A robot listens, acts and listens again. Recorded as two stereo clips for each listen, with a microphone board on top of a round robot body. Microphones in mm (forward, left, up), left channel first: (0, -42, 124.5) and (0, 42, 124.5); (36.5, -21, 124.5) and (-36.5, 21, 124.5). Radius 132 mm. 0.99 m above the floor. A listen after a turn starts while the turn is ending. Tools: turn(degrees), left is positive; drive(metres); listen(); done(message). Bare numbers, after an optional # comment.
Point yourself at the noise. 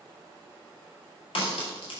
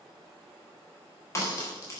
# The crack: 85° right.
turn(-85)
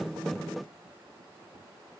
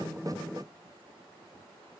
done("Facing where the crack came from. I can't hear it now.")